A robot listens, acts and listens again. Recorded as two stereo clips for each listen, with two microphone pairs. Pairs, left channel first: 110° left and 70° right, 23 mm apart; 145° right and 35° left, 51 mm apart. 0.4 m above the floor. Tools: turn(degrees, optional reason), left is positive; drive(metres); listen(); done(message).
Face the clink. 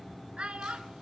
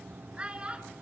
listen()
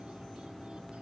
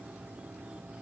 listen()
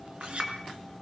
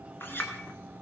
turn(degrees=-105, reason="The clink: 105° right.")
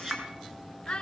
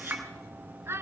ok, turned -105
done("Found it: a clink, straight ahead, over 4 m away.")